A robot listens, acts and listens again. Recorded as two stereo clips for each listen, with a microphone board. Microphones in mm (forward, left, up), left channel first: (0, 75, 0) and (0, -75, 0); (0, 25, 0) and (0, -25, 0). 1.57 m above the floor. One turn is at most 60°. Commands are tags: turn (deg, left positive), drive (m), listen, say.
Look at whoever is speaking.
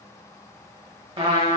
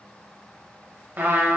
<listen/>
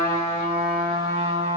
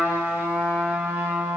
<listen/>
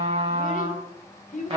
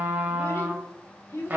<turn deg="60"/>
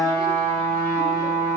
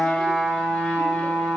<listen/>
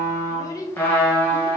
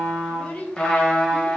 <turn deg="25"/>
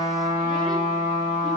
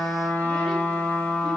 <listen/>
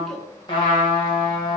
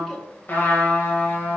<listen/>
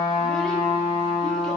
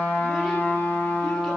<say>Facing where the child speaking came from. I can't hear it now.</say>